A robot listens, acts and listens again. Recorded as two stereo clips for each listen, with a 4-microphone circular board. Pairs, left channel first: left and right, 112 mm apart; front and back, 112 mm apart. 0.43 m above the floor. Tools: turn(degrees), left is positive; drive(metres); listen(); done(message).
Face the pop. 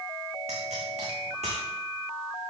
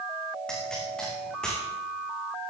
turn(degrees=-85)
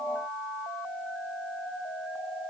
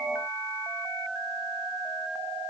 done("Facing where the pop came from. I can't hear it now.")